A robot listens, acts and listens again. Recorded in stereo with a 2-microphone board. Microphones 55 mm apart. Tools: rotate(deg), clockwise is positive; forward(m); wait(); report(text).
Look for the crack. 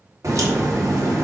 rotate(60)
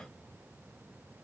wait()
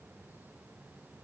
report("I heard a crack, but can't make it out now. It was about straight ahead or 60° right.")